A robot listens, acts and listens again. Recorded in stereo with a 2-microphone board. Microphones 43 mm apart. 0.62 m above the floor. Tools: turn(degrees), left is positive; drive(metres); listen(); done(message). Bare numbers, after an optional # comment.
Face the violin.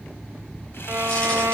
turn(-90)
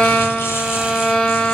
# So it is at 15° left.
turn(15)
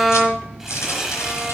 done("Facing the violin.")